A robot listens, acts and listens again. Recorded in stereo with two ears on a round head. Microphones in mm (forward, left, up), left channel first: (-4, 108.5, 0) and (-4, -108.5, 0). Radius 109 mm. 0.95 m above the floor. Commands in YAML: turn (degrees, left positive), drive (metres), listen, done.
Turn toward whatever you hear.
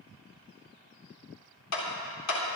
turn: 75
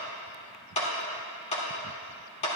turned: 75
turn: 30
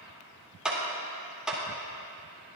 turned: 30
done: "Facing the clap, 2 to 4 m away."